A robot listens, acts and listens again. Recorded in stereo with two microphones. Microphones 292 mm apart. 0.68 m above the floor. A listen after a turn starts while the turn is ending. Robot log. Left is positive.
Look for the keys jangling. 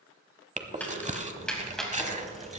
cmd yaw +30
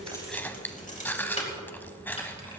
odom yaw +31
note: So it is at 155° left.
cmd yaw +155
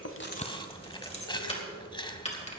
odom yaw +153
note: The keys jangling is now 20° left.
cmd yaw +20
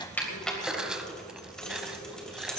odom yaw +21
end: Found it: keys jangling, straight ahead.